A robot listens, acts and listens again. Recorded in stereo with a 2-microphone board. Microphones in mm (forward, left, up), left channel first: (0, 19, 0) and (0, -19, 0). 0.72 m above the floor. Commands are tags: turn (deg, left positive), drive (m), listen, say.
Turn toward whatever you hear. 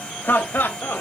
<turn deg="60"/>
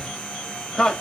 <turn deg="25"/>
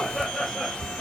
<turn deg="10"/>
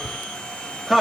<say>Facing the laughter.</say>